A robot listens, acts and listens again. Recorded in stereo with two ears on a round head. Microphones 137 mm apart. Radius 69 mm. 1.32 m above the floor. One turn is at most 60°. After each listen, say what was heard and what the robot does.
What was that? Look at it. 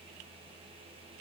Keep listening.
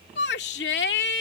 Turn 60° left.
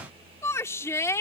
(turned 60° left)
So it is at 20° left. Turn 20° left.
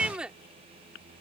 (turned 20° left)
Facing the shout.